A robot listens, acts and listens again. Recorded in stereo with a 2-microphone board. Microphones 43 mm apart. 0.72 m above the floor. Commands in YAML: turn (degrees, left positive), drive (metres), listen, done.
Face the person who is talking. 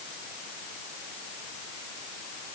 listen: true
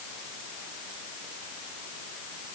listen: true
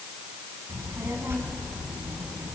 turn: -65
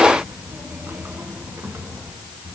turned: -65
turn: -50
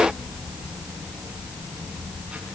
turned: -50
turn: -20
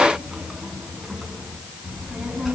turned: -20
done: "Found it: a child speaking, straight ahead, over 4 m away."